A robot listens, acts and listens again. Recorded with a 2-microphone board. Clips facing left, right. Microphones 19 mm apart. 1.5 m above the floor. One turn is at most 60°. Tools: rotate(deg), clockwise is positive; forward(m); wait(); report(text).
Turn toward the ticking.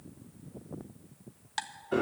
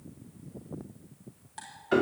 rotate(-60)
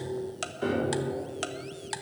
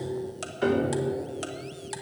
rotate(-25)
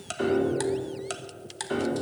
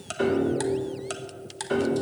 report("Found it: ticking, straight ahead.")